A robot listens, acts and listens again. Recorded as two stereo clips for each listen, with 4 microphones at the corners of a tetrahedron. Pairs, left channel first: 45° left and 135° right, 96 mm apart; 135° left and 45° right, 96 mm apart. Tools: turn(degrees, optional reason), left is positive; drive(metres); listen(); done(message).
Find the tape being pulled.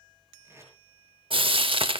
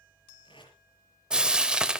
turn(degrees=165, reason="The tape being pulled: 165° left.")
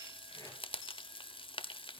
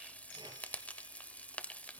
listen()
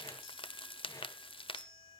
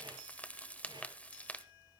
listen()
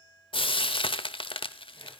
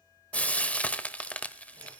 done("Facing where the tape being pulled came from. I can't hear it now.")